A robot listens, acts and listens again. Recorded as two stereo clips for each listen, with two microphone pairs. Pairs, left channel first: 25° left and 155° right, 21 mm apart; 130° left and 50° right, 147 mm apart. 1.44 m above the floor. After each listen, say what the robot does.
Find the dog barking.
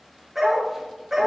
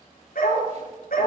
Turn 130° left.
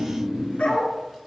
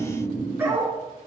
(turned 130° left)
Turn 25° left.
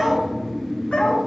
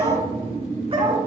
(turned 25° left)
Facing the dog barking, over 4 m away.